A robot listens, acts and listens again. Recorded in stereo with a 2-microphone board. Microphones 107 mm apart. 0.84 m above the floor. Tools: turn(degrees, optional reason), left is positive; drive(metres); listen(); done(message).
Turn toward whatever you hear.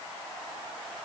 listen()
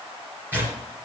turn(degrees=-20, reason="The tearing paper: about 20° right or 160° right.")
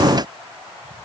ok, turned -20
listen()
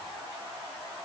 listen()
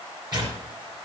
turn(degrees=-140, reason="So it is at 140° right.")
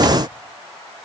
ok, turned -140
listen()
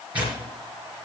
turn(degrees=-15, reason="The tearing paper is now 15° right.")
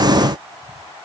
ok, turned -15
listen()
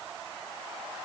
listen()
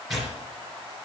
done("Facing the tearing paper.")